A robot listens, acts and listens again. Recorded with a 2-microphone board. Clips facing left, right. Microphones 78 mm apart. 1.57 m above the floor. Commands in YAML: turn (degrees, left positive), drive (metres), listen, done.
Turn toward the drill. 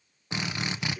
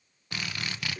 turn: 20
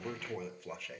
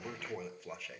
listen: true
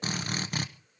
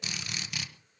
turn: 140
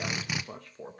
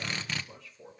turn: 15
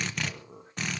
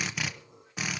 done: "Found it: a drill, straight ahead."